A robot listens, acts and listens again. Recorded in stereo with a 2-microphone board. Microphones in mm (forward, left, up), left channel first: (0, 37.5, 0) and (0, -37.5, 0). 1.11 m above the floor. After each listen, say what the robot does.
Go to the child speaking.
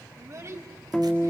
Turn 40° right.
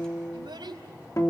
Turn 100° right.
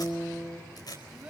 Keep listening.
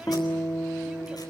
Keep listening.
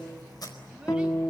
I heard a child speaking from this way, but can't make it out now. I did not reach it.